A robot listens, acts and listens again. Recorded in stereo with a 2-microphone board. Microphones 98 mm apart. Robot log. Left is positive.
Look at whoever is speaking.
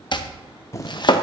cmd idle
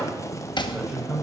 cmd yaw -30
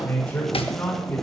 note: So it is at 15° left.
cmd yaw +15
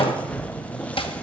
cmd idle
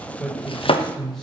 end: Facing the man speaking.